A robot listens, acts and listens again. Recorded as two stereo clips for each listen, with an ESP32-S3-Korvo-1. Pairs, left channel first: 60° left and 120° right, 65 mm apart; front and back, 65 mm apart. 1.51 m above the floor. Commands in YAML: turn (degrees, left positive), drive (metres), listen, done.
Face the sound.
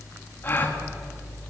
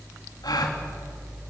done: "Facing the gasp, 2 to 4 m away."